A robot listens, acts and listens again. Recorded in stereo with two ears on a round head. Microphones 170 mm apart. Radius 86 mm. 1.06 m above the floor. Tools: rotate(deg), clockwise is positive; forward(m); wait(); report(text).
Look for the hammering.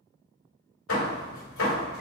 rotate(-90)
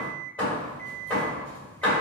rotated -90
report("Found it: hammering, straight ahead.")